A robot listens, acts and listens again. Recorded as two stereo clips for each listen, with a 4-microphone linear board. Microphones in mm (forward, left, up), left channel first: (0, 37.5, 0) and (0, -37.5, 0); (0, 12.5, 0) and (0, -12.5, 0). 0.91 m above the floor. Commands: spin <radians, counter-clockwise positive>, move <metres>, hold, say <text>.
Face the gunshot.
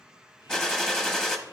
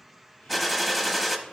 spin 0.52
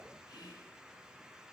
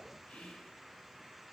hold
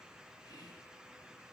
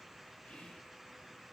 say I heard a gunshot, but can't make it out now. It was about 25° right or 145° left.